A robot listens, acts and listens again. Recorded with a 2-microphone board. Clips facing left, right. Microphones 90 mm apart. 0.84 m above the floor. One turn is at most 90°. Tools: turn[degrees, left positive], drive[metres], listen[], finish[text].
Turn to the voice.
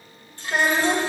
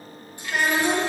Thought: The child speaking: about 30° left or 150° left.
Action: turn[30]
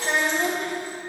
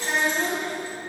Thought: So it is at 115° left.
Action: turn[90]
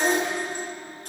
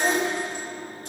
Action: finish[Facing the child speaking.]